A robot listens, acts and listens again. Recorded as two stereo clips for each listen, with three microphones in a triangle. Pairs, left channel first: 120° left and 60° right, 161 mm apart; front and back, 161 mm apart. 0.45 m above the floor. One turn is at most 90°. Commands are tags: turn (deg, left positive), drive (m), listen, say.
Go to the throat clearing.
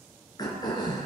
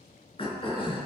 <turn deg="55"/>
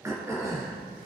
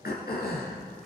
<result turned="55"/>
<turn deg="10"/>
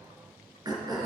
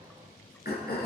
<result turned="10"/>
<drive m="1.0"/>
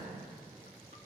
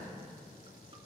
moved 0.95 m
<listen/>
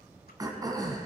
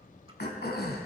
<drive m="1.0"/>
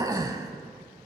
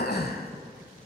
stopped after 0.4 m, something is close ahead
<say>Arrived at the throat clearing, straight ahead.</say>